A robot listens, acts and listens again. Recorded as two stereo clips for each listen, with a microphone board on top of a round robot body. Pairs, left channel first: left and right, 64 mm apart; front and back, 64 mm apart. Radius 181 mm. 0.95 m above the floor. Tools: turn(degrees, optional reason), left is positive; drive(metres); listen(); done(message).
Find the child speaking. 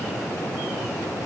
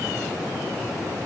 listen()
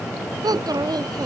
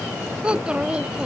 turn(degrees=-105, reason="The child speaking: 105° right.")
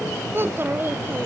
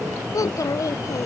turn(degrees=-35, reason="The child speaking is now 35° right.")
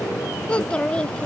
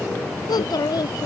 turn(degrees=15, reason="The child speaking is now 15° left.")
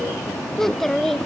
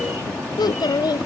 done("Facing the child speaking.")